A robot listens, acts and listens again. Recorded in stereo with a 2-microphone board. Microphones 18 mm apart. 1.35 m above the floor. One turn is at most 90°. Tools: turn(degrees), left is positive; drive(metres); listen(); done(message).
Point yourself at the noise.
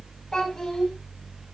turn(degrees=35)
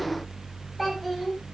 done("Facing the child speaking.")